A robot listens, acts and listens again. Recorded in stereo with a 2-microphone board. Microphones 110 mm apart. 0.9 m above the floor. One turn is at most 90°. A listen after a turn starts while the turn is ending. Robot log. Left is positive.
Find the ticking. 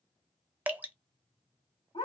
cmd idle
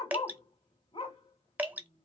cmd idle
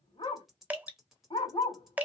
cmd yaw +30
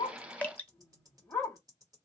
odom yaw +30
note: So it is at 35° right.
cmd yaw -35
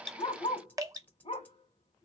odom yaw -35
note: The ticking is now 15° left.
cmd yaw +15
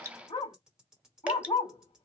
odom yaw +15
end: Facing the ticking.